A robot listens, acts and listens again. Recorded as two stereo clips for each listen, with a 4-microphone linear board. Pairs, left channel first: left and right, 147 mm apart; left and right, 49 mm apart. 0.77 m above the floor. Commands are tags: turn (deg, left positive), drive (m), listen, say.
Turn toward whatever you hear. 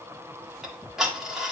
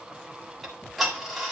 <turn deg="-30"/>
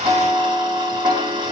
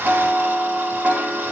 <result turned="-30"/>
<turn deg="-145"/>
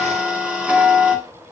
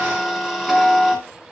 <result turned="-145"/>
<turn deg="-10"/>
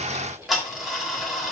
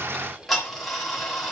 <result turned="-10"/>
<say>Found it: ticking, straight ahead, 1 to 2 m away.</say>